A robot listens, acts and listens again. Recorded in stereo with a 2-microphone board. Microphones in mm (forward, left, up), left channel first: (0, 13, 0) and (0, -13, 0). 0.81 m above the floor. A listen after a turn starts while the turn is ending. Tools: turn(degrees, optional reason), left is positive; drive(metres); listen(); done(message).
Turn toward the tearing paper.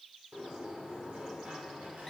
listen()
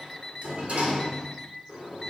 listen()
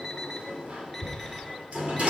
turn(degrees=65, reason="The tearing paper: about 65° left or 115° left.")
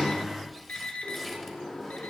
listen()
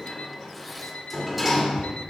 listen()
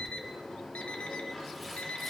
done("I heard tearing paper, but can't make it out now. It was about straight ahead or 50° left.")